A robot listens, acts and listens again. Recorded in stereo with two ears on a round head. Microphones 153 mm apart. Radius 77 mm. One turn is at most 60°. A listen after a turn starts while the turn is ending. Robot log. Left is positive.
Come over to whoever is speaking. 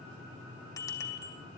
cmd idle
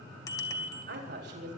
note: The woman speaking: about 70° right or 110° right.
cmd yaw -60
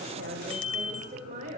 note: So it is at 45° right.
cmd yaw -45
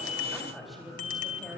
cmd idle
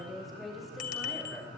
cmd fwd 1.0
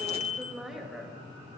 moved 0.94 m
cmd fwd 1.0
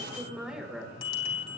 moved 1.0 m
cmd fwd 1.0
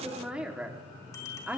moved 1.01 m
note: The woman speaking is now 10° right.
cmd yaw -10
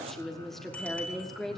cmd fwd 1.0
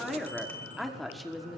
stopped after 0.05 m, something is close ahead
end: Arrived at the woman speaking, straight ahead.